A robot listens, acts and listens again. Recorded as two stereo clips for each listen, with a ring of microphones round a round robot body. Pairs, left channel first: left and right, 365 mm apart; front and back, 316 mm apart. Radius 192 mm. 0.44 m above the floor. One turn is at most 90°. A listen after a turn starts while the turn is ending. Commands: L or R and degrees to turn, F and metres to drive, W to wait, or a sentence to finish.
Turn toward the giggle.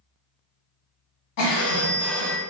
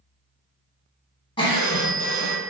L75
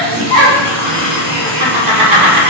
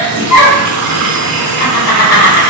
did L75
R15
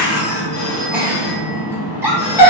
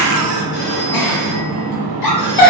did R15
Found it: a giggle, straight ahead, under 1 m away.